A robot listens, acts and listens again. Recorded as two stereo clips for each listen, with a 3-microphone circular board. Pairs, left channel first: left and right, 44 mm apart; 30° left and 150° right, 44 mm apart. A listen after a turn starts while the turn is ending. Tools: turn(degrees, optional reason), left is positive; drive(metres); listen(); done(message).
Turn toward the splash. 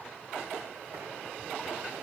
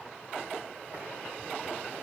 listen()
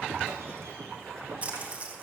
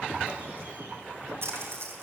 turn(degrees=-145, reason="The splash: 145° right.")
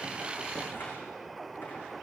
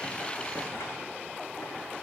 done("Facing where the splash came from. I can't hear it now.")